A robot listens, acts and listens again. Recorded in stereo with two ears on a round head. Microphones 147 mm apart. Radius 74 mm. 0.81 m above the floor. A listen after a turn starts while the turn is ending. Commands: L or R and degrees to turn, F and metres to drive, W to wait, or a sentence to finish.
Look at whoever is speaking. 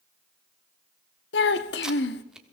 L90
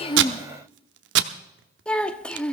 Facing the child speaking, under 1 m away.